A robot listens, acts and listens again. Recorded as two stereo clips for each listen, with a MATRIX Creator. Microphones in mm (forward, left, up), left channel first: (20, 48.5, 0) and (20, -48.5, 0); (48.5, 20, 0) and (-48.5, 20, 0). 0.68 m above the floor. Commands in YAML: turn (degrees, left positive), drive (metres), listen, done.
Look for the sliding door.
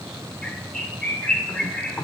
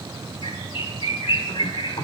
listen: true
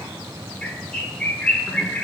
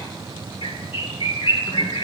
listen: true
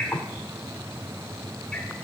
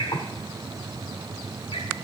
done: "I can't make out a sliding door to turn to."